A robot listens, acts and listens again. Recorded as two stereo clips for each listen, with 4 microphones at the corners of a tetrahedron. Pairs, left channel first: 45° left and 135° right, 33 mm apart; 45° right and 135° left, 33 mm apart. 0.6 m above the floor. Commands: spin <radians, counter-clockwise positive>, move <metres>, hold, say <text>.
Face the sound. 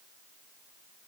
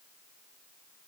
hold
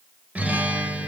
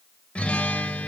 spin -1.75
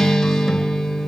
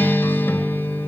spin -0.70
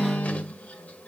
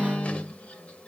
say Found it: a guitar, straight ahead, 1 to 2 m away.